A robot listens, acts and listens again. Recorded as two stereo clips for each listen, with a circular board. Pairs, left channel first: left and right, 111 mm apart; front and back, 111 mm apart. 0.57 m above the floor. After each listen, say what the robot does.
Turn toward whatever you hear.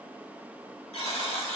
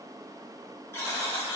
Turn 65° left.
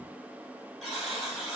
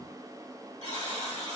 Facing the buzzer.